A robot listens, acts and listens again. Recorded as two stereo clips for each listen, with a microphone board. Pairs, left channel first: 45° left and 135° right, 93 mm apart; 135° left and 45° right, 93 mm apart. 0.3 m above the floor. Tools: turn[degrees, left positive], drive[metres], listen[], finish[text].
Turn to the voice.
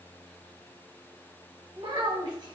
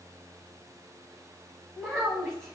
Thought: The child speaking: 140° right.
Action: turn[-140]
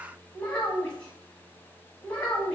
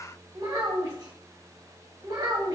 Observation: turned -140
Thought: The child speaking is now 30° right.
Action: turn[-30]
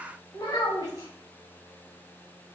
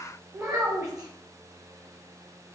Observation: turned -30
Action: finish[Facing the child speaking, 1 to 2 m away.]